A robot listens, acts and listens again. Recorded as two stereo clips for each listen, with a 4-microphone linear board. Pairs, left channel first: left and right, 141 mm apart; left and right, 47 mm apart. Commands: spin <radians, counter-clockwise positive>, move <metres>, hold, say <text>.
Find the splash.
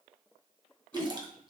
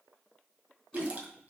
spin -0.61
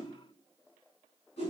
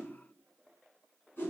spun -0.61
hold
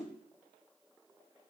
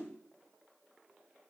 say I heard a splash, but can't make it out now. It was about straight ahead or 110° right.